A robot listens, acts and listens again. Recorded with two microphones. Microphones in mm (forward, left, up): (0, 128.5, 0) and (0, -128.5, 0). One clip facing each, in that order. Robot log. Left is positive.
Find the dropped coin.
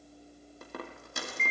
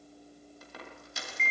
note: The dropped coin: about 55° left or 125° left.
cmd yaw +55
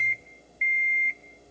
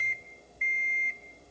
cmd idle
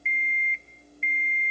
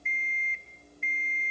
end: I heard a dropped coin, but can't make it out now. It was about straight ahead or 70° left.